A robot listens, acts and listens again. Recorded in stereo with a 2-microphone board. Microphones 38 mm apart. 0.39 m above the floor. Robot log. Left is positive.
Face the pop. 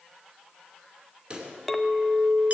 note: The pop: about 30° right or 150° right.
cmd yaw -30
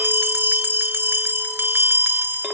cmd idle
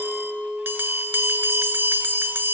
end: I heard a pop, but can't make it out now. It was about straight ahead or 120° right.